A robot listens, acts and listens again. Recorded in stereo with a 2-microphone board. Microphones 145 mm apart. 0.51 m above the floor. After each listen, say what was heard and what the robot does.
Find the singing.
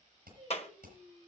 The singing: about 40° right or 140° right. Turn 40° right.
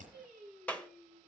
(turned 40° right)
Found it: singing, straight ahead, over 4 m away.